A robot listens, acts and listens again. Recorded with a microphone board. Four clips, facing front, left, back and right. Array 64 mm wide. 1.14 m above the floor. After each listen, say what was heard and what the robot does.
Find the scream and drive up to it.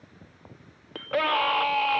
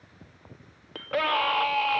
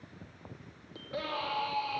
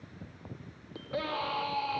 The scream: 40° left. Turn 40° left.
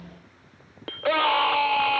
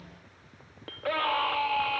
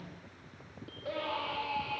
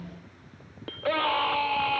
Drive 1.0 m forward.
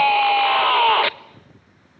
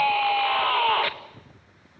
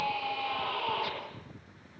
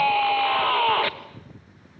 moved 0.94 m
Drive 1.0 m forward.
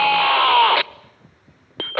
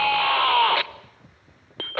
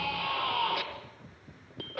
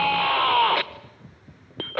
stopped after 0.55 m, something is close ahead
Arrived at the scream, straight ahead.